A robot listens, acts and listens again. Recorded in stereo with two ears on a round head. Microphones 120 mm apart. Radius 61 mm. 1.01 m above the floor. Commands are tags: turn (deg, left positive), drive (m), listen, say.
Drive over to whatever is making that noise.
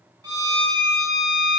<turn deg="-30"/>
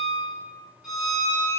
<drive m="1.0"/>
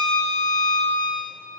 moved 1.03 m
<drive m="1.0"/>
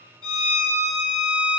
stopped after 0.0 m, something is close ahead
<turn deg="10"/>
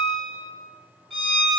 <say>Arrived at the violin, straight ahead.</say>